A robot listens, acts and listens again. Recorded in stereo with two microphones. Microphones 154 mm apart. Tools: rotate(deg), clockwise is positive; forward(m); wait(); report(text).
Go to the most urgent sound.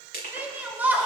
rotate(30)
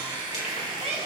rotate(140)
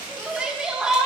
forward(1.0)
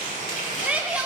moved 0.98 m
rotate(10)
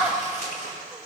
forward(1.0)
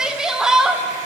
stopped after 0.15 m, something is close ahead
report("I am next to the shout.")